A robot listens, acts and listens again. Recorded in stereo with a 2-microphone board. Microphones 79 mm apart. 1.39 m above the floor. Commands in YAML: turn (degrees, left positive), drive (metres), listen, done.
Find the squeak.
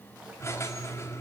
turn: 35
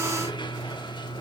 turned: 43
turn: 100
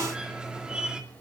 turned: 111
turn: -10
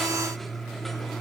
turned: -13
done: "Found it: a squeak, straight ahead, 2 to 4 m away."